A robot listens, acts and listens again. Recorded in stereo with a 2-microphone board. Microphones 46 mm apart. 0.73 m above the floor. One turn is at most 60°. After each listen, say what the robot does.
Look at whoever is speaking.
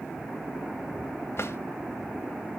Keep listening.
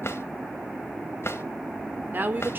Turn 45° right.
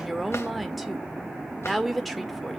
Facing the woman speaking.